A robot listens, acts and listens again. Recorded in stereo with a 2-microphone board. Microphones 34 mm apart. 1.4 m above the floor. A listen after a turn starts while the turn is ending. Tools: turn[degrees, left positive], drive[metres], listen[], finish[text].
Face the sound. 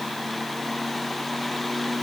Action: listen[]
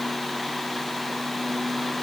Action: listen[]
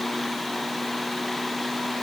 Action: finish[I can't make out anything to turn to.]